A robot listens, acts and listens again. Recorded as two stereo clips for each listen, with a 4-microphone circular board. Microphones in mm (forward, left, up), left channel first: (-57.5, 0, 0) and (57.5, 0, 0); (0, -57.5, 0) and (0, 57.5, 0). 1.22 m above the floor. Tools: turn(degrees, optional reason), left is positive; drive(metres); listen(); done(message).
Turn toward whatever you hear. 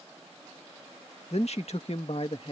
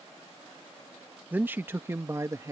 turn(degrees=150, reason="The man speaking: 150° left.")
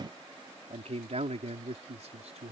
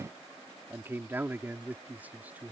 turn(degrees=15, reason="The man speaking is now 15° left.")
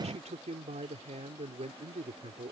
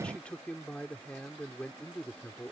turn(degrees=-10, reason="The man speaking is now 10° right.")
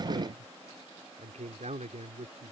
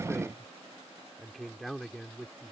done("Found it: a man speaking, straight ahead.")